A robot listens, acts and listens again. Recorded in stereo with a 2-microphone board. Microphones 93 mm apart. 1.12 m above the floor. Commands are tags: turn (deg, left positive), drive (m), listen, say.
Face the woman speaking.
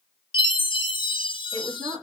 <turn deg="-60"/>
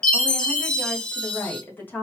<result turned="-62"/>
<turn deg="25"/>
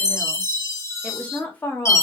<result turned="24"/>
<turn deg="20"/>
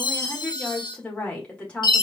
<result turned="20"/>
<turn deg="15"/>
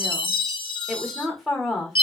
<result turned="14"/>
<say>Facing the woman speaking.</say>